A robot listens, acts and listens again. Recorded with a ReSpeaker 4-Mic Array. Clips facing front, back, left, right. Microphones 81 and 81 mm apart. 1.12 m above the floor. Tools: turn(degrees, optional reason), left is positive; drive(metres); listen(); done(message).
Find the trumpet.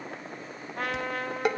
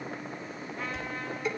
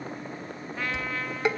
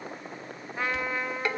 turn(degrees=-20, reason="The trumpet: 20° right.")
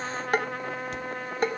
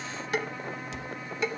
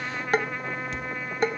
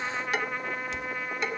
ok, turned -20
done("Facing the trumpet.")